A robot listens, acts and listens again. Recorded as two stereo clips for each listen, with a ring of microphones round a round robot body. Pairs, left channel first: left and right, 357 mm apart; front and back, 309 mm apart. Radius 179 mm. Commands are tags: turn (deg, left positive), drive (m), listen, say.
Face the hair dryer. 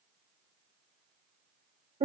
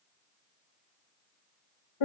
<listen/>
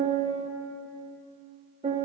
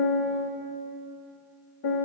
<listen/>
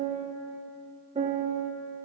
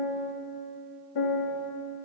<say>I can't make out a hair dryer, only a piano.</say>